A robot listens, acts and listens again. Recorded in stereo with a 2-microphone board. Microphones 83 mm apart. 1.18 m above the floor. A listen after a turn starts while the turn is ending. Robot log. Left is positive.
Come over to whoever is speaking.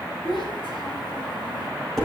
cmd yaw +90
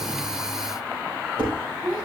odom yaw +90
note: So it is at 15° right.
cmd yaw -15
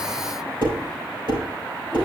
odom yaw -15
cmd idle
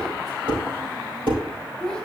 cmd fwd 1.0
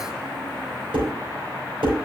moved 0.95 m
cmd idle
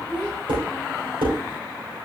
cmd fwd 1.0
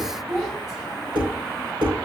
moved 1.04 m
cmd fwd 1.0
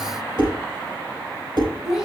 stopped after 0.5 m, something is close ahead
end: I am next to the child speaking.